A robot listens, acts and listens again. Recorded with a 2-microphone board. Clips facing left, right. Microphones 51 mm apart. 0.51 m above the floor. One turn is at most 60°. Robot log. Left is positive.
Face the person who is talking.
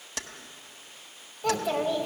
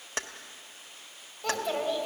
cmd yaw +30
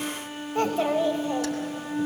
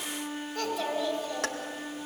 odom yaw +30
note: So it is at 145° left.
cmd yaw +60
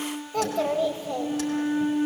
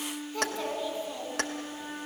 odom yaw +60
note: The child speaking is now 105° left.
cmd yaw +60
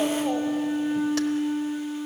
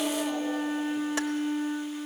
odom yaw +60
note: Nothing new. It was at 45° left.
cmd yaw +45
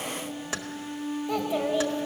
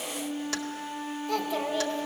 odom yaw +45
note: The child speaking is now 15° left.
cmd yaw +15
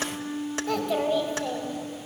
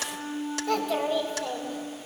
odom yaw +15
end: Found it: a child speaking, straight ahead.